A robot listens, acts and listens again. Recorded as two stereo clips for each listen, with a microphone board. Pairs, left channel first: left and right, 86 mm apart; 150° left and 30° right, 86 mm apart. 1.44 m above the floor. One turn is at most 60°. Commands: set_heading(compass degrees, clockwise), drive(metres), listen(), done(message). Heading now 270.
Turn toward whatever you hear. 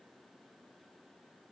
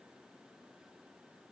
listen()
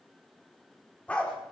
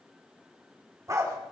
set_heading(255)
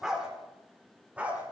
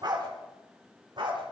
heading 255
set_heading(275)
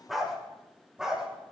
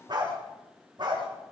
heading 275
done("Found it: a dog barking, straight ahead.")